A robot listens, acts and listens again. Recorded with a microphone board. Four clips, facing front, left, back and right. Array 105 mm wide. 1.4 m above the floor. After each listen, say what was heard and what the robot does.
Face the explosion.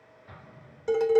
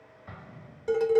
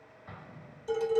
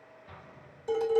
The explosion: 120° left. Turn 120° left.
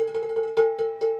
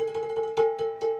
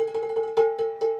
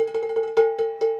Facing where the explosion came from. I can't hear it now.